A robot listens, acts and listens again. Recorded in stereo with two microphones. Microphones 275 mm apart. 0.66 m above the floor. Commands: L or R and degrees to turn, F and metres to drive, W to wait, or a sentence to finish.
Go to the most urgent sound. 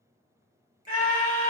L30
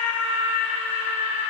L120
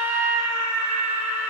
L15
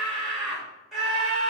F1.0
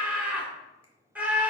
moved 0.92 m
F1.0
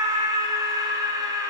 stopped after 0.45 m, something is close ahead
R15
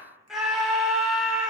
I am next to the scream.